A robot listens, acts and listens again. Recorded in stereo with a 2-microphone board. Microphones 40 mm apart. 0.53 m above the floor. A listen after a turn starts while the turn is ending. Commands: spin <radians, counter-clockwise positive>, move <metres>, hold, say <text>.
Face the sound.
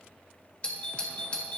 spin 0.52
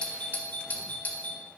spin 2.01
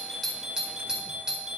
spin -0.35
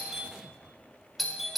say Found it: a doorbell, straight ahead.